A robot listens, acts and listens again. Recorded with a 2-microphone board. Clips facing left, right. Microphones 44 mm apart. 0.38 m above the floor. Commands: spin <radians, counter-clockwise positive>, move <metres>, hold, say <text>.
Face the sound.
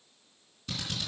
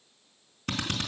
spin -1.05
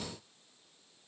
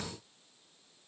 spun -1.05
hold
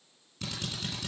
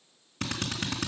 spin -1.05
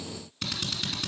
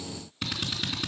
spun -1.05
spin -0.17
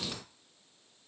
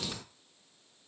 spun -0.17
hold
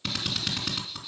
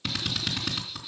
say Found it: a drill, straight ahead.